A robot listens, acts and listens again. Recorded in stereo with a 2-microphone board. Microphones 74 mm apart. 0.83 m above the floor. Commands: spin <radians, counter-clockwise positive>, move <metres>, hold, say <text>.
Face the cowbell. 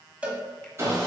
spin -0.26
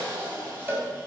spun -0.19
spin -2.71
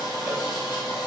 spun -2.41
spin -0.26
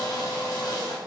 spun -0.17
say Found it: a cowbell, straight ahead, under 1 m away.